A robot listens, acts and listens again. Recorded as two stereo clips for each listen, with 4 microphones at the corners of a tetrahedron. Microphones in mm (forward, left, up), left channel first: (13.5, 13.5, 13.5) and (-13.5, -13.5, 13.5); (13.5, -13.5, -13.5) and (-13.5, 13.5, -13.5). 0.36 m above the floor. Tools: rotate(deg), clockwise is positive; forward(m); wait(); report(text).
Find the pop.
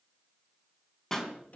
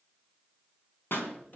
rotate(30)
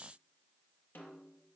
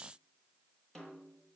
report("Facing where the pop came from. I can't hear it now.")